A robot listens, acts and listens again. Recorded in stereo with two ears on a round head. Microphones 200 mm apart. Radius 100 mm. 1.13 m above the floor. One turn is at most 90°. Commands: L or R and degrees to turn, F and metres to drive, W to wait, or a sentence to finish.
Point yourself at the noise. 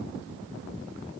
W
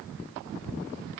W
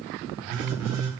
R60
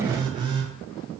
R20
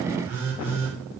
R10
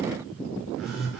Found it: a phone buzzing, straight ahead.